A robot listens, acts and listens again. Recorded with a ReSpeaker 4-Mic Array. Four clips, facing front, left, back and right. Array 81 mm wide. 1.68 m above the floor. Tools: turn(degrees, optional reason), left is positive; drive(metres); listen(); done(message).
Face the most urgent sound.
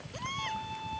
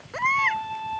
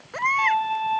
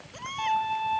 turn(degrees=140, reason="The baby crying: 140° left.")
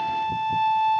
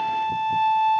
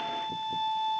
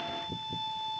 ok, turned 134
listen()
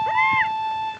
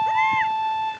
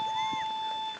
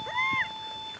listen()
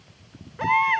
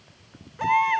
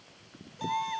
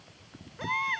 done("Found it: a baby crying, straight ahead.")